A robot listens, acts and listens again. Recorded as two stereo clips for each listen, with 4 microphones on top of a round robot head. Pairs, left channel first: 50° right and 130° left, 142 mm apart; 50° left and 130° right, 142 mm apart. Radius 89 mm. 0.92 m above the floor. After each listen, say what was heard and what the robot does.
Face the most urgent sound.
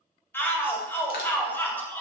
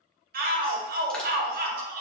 The shout: 125° right. Turn 125° right.
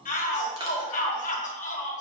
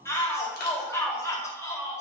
The shout is now 20° right. Turn 20° right.
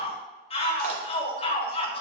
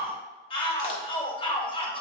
Found it: a shout, straight ahead, 1 to 2 m away.